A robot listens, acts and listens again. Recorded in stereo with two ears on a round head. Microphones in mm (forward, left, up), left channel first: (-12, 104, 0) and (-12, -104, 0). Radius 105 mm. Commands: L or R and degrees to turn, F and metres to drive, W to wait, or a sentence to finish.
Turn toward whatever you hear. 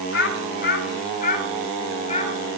L30
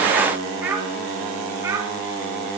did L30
R15
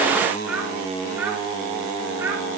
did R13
R10
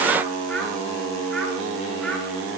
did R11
W
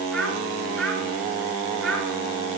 Found it: a child speaking, straight ahead.